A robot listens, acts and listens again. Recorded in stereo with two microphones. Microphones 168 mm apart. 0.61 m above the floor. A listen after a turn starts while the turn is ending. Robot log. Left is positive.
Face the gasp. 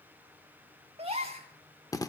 note: The gasp: about 35° right or 145° right.
cmd yaw -35
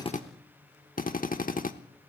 cmd idle
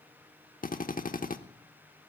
end: I heard a gasp, but can't make it out now. It was about straight ahead or 110° right.